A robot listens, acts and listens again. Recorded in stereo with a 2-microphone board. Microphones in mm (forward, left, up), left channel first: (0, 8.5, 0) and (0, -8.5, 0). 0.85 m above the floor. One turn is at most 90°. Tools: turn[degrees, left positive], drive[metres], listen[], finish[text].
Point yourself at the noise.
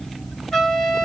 Thought: The trumpet: about 35° left or 145° left.
Action: turn[35]
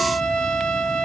Thought: So it is at 110° left.
Action: turn[90]
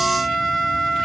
Thought: The trumpet is now 10° right.
Action: turn[-10]
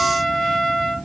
Action: finish[Found it: a trumpet, straight ahead, 1 to 2 m away.]